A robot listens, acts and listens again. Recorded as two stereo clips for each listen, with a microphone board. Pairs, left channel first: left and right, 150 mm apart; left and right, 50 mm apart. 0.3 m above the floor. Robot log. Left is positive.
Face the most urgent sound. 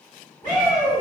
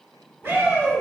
note: The shout: about 20° left or 160° left.
cmd yaw +20
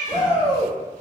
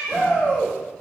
note: So it is at 140° left.
cmd yaw +140
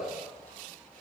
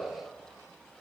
cmd idle
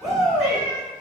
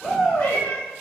end: Facing the shout.